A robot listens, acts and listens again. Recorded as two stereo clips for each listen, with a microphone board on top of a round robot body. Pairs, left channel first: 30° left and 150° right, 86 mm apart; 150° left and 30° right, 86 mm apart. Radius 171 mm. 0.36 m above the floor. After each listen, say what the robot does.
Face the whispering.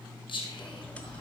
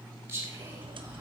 Turn 30° left.
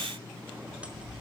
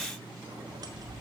Keep listening.
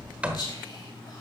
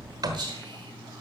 Keep listening.
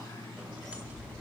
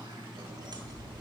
Facing where the whispering came from. I can't hear it now.